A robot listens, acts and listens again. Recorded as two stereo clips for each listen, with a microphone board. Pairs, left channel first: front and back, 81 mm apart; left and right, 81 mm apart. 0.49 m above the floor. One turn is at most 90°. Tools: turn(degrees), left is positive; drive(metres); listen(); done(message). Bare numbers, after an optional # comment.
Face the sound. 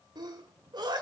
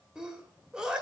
# The sneeze: 170° right.
turn(-90)
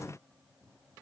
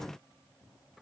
# Nothing new. It was at 80° right.
turn(-80)
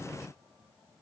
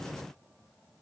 done("I heard a sneeze from this way, but can't make it out now.")